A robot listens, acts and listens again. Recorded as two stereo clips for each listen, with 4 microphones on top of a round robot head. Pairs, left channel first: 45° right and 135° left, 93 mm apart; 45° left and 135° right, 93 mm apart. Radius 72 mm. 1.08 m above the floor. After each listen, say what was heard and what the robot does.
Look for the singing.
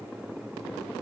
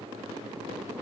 Keep listening.
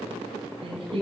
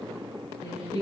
The singing: 105° left. Turn 105° left.
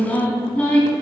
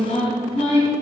The singing is now 30° left. Turn 30° left.
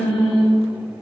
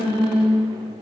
Found it: singing, straight ahead.